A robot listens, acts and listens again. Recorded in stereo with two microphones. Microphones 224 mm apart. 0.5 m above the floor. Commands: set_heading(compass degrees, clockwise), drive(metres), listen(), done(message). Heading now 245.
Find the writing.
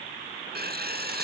set_heading(290)
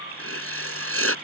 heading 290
set_heading(20)
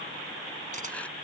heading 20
listen()
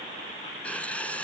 done("Facing the writing.")